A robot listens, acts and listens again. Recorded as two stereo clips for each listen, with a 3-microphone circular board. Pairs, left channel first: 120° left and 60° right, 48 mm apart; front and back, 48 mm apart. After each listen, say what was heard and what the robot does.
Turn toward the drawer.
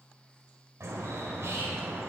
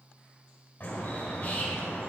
Keep listening.
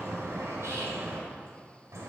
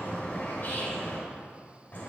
Keep listening.
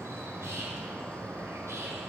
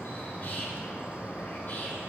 I can't make out a drawer to turn to.